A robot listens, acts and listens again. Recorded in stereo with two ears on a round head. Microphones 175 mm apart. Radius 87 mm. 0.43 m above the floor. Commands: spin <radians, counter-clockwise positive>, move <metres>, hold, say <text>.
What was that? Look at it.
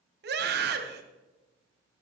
spin -1.05
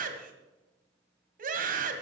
spin -0.96
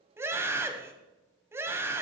spin -0.26
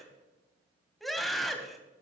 say Found it: a scream, straight ahead, 2 to 4 m away.